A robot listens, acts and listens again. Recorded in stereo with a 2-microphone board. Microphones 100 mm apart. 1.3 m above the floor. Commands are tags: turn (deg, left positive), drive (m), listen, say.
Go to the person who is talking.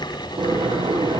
<listen/>
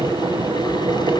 <listen/>
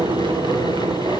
<say>I can't make out anyone speaking to turn to.</say>